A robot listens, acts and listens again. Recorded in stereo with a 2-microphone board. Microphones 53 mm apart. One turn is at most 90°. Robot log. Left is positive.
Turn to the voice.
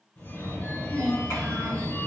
note: The child speaking: about 60° left or 120° left.
cmd yaw +60
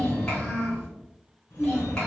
note: So it is at 15° left.
cmd yaw +15
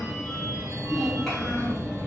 cmd idle
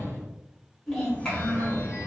end: Found it: a child speaking, straight ahead.